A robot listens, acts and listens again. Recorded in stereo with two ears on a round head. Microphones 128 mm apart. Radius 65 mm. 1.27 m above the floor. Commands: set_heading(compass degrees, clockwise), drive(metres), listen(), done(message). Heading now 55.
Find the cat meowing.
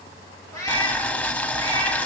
set_heading(35)
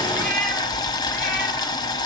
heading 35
listen()
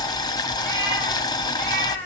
set_heading(20)
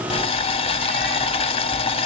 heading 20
listen()
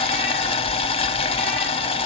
listen()
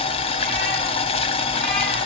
done("I heard a cat meowing, but can't make it out now. It was about straight ahead or 150° left.")